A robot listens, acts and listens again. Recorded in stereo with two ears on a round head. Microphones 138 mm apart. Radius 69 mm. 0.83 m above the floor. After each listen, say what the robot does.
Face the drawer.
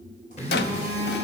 Turn 75° left.
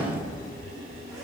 Keep listening.
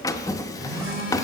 Turn 25° left.
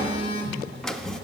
Found it: a drawer, straight ahead.